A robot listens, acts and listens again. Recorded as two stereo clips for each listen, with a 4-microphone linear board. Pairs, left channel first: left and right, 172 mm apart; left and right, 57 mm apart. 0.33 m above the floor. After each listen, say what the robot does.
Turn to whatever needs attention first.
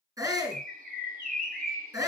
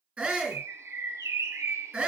Turn 20° right.
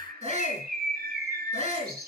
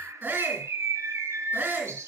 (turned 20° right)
Turn 140° right.
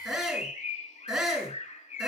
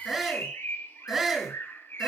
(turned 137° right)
Found it: a shout, straight ahead, 2 to 4 m away.